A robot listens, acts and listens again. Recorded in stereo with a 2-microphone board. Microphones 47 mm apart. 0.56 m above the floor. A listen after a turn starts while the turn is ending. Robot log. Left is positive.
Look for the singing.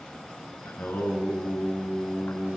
note: The singing: about 50° left or 130° left.
cmd yaw +50
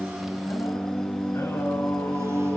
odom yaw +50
note: So it is at 80° left.
cmd yaw +80
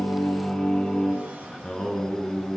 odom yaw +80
note: The singing is now 15° left.
cmd yaw +15
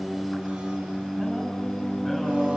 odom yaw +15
end: Facing the singing, over 4 m away.